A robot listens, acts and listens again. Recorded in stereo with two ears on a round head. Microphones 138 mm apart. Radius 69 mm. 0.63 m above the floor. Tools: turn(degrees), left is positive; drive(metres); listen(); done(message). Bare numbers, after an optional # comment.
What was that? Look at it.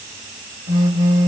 # The phone buzzing: about 35° right or 145° right.
turn(-35)
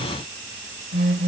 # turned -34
# So it is at 100° right.
turn(-100)
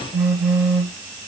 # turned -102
done("Found it: a phone buzzing, straight ahead, 2 to 4 m away.")